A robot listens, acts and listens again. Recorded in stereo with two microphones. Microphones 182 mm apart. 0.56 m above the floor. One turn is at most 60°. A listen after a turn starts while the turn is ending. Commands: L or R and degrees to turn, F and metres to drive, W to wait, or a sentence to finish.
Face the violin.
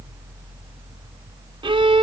R25
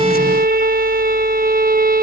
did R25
R60
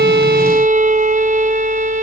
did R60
R45
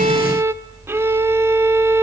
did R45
R15
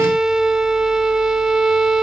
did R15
Found it: a violin, straight ahead.